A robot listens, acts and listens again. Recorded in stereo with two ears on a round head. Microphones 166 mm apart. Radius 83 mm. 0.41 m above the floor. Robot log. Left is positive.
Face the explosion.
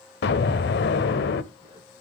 note: The explosion: about 60° left or 120° left.
cmd yaw +60
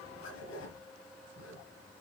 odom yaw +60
cmd idle
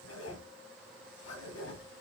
end: I heard an explosion, but can't make it out now. It was about straight ahead or 60° left.